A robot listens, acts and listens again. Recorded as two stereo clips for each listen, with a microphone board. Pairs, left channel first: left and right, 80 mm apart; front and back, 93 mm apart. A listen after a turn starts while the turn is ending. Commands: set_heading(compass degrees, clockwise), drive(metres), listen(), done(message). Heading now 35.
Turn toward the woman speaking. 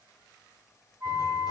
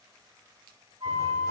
listen()
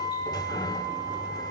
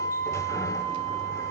listen()
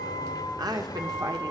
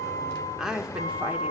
set_heading(135)
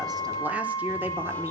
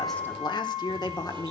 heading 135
set_heading(165)
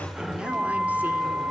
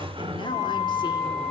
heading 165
listen()
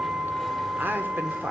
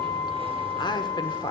set_heading(190)
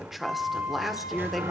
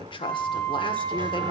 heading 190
done("Facing the woman speaking, 1 to 2 m away.")